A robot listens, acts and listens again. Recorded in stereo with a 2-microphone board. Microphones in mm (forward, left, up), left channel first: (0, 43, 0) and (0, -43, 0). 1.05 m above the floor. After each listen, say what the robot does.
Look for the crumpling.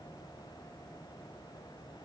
Keep listening.
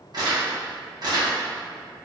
Turn 55° right.
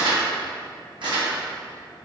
Turn 75° right.
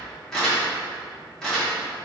Facing the crumpling.